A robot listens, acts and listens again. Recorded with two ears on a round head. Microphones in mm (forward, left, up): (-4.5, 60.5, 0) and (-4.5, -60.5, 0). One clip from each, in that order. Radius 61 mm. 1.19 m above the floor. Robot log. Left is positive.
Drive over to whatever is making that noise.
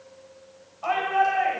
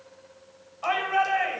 note: The shout: about 50° right or 130° right.
cmd yaw -50
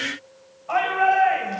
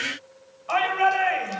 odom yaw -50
note: So it is at 80° right.
cmd yaw -80
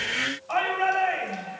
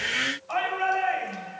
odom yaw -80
cmd fwd 1.0
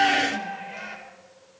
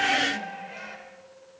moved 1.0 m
cmd fwd 1.0
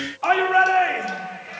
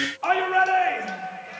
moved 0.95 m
cmd fwd 1.0
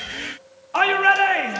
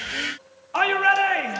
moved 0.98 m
cmd fwd 1.0
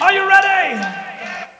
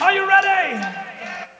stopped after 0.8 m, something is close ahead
end: I am next to the shout.